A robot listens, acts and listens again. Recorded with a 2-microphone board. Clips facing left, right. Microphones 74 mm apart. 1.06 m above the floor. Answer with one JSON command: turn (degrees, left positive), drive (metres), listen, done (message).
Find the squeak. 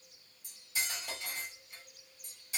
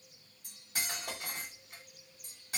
{"listen": true}
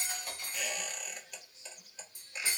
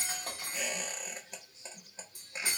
{"turn": -30}
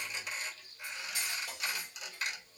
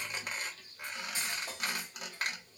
{"turn": -115}
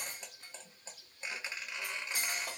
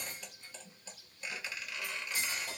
{"turn": 30}
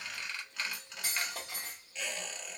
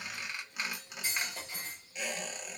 {"turn": -15}
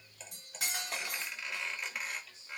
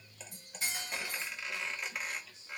{"done": "Found it: a squeak, straight ahead, under 1 m away."}